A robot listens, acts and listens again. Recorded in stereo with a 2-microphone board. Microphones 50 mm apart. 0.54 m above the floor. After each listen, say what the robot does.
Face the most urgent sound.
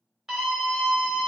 Turn 30° right.
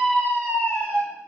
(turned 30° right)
Turn 20° left.
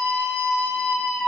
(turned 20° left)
Facing the scream, 2 to 4 m away.